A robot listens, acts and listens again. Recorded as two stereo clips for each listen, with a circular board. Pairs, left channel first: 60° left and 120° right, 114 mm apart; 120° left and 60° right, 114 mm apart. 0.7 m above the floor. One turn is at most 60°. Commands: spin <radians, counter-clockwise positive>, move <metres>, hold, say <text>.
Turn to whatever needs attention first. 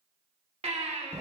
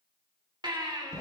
spin -1.05
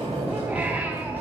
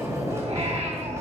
spin -0.79
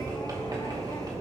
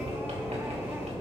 hold
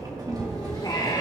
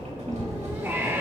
spin 0.17
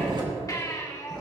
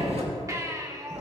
say Facing the baby crying, 1 to 2 m away.